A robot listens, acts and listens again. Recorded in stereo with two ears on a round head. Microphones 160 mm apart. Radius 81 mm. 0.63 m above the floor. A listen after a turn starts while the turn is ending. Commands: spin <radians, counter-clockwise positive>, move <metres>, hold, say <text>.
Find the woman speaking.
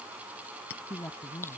spin 0.52
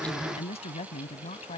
spin 2.44
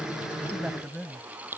say Found it: a woman speaking, straight ahead.